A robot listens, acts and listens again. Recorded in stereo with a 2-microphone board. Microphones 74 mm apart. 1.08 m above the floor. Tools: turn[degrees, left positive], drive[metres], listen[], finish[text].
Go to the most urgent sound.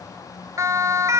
Thought: The siren: about 45° right or 135° right.
Action: turn[-45]
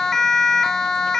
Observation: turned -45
Action: drive[1.0]
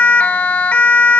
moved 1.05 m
Thought: The siren is now 20° left.
Action: turn[20]
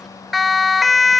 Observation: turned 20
Action: drive[1.0]
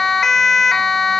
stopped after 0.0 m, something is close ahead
Action: finish[I am next to the siren.]